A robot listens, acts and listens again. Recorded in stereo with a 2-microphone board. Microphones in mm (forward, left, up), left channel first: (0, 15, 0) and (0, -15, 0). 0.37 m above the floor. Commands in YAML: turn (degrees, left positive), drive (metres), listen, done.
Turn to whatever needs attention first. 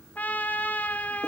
listen: true
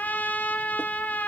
listen: true
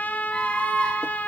turn: 45
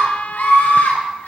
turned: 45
turn: 90
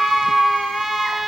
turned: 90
turn: 30
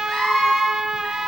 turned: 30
turn: 15
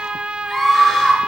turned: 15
done: "Found it: a scream, straight ahead."